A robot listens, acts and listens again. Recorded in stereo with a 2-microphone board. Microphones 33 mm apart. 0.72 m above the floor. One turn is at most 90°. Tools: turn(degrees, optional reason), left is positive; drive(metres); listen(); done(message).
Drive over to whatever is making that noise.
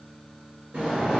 turn(degrees=-75, reason="The sliding door: about 75° right or 105° right.")
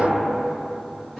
drive(metres=1.0)
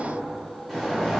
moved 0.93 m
drive(metres=1.0)
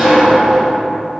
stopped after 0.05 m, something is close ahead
done("I am next to the sliding door.")